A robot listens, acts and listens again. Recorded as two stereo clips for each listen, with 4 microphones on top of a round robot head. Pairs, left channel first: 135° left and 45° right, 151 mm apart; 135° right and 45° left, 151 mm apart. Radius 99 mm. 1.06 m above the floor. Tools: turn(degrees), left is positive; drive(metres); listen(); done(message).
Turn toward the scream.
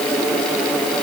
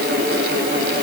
listen()
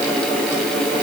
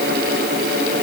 listen()
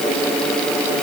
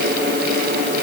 done("I can't make out a scream to turn to.")